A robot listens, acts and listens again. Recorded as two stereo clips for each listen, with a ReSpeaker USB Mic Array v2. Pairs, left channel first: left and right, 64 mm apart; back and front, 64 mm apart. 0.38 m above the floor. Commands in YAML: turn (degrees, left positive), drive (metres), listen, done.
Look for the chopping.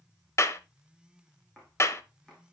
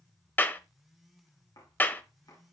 turn: 170
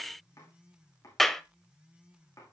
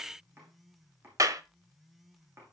turn: 50
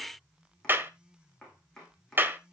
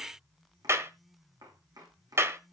turn: 10
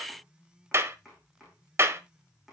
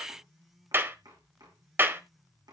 done: "Facing the chopping, over 4 m away."